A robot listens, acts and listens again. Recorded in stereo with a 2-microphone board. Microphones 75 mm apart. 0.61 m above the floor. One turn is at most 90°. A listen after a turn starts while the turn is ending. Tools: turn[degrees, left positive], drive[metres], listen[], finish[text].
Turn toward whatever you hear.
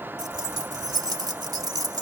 Thought: The keys jangling: about 60° right or 120° right.
Action: turn[-60]
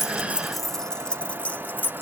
Thought: So it is at 30° left.
Action: turn[30]
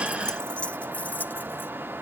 Thought: The keys jangling is now 25° left.
Action: turn[25]
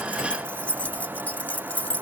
Thought: The keys jangling is now 20° left.
Action: turn[20]
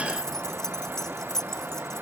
Action: finish[Facing the keys jangling.]